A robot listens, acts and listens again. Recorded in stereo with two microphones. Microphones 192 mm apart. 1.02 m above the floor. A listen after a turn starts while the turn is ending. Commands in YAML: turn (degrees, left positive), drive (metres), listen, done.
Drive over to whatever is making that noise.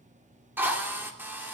turn: -30
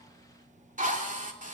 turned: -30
turn: -140
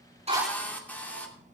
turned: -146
turn: 10
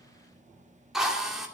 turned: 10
drive: 1.0
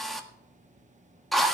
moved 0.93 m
drive: 1.0
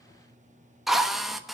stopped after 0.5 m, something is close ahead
done: "I am next to the drill."